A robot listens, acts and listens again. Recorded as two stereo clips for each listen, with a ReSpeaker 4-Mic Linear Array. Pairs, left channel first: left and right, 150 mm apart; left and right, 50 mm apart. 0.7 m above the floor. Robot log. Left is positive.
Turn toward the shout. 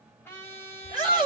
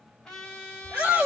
note: The shout: about 30° right or 150° right.
cmd yaw -30
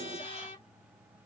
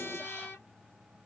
cmd idle
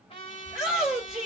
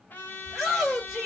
end: Found it: a shout, straight ahead, 2 to 4 m away.